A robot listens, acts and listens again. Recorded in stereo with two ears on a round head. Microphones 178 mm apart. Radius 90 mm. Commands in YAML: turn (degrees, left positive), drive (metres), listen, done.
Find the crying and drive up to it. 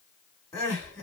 turn: 30
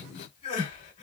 turn: 140
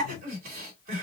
turn: -55
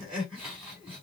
drive: 1.0
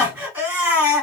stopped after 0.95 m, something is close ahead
turn: -10
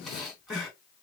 done: "Arrived at the crying, straight ahead."